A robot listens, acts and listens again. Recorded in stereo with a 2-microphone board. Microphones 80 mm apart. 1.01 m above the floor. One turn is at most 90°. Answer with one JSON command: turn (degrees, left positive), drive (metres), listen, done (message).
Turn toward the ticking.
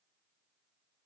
{"listen": true}
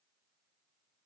{"listen": true}
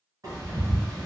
{"turn": -45}
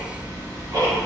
{"turn": -80}
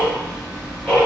{"turn": -10}
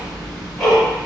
{"done": "Found it: ticking, straight ahead, 1 to 2 m away."}